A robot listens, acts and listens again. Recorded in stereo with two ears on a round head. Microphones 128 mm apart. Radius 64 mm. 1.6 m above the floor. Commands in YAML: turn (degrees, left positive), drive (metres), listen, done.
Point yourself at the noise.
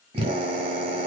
turn: -45
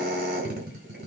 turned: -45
turn: -90
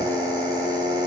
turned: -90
turn: -30
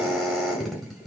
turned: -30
done: "Facing the drill."